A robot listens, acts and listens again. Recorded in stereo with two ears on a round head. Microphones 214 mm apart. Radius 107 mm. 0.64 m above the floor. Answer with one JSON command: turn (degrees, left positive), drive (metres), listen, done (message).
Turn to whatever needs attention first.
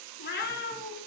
{"listen": true}
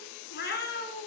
{"listen": true}
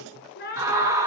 {"turn": -30}
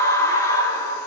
{"turn": 15}
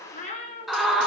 {"done": "Facing the scream, 2 to 4 m away."}